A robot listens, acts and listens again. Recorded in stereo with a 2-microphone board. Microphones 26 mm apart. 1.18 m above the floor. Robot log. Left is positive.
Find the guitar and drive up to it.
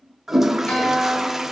note: The guitar: about 65° left or 115° left.
cmd yaw +65
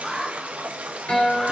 note: So it is at 50° left.
cmd yaw +50
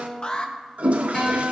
note: The guitar is now 20° left.
cmd yaw +20
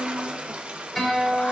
cmd fwd 1.0
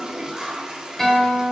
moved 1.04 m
cmd fwd 1.0
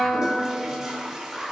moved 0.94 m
note: The guitar is now 10° left.
cmd yaw +10
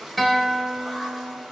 cmd fwd 1.0
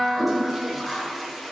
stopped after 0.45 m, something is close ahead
note: The guitar is now 10° right.
cmd yaw -10
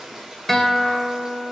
end: I am next to the guitar.